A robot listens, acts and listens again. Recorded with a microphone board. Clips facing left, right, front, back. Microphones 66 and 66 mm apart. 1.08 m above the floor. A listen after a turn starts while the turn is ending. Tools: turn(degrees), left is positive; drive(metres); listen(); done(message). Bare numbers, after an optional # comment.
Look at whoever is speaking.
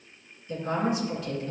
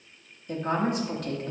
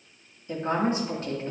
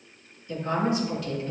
# The woman speaking: 55° right.
turn(-55)
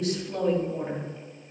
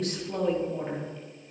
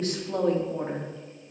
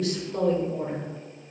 done("Facing the woman speaking.")